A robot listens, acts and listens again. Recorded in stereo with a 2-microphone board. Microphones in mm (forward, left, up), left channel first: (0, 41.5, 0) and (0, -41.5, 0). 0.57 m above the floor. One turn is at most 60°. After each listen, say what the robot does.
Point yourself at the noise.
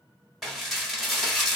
Turn 30° left.
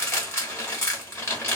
Turn 60° left.
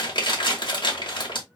Turn 60° left.
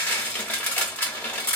Turn 20° left.
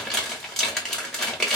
Facing the dishes clattering.